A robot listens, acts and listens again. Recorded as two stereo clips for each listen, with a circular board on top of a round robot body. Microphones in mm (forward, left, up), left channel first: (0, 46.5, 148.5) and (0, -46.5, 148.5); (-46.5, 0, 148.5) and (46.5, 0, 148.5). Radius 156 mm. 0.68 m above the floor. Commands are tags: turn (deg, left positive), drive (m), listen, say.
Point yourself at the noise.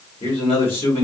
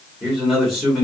<turn deg="85"/>
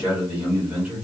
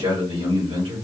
<turn deg="-20"/>
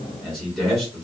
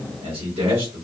<say>Facing the man speaking, 1 to 2 m away.</say>